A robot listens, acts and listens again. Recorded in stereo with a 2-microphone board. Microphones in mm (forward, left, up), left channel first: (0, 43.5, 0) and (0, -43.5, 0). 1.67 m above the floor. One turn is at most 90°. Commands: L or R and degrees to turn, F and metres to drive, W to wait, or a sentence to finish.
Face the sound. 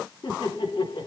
L65
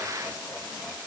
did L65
W
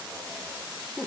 Facing the laughter.